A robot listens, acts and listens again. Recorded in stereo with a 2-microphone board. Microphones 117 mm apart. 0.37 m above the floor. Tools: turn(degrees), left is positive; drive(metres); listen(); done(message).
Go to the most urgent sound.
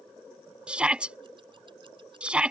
turn(degrees=-30)
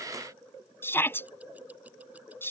turn(degrees=20)
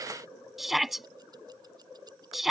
drive(metres=1.0)
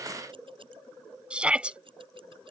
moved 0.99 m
turn(degrees=-10)
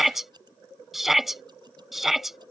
drive(metres=1.0)
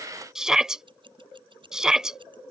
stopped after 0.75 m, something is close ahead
done("I am next to the shout.")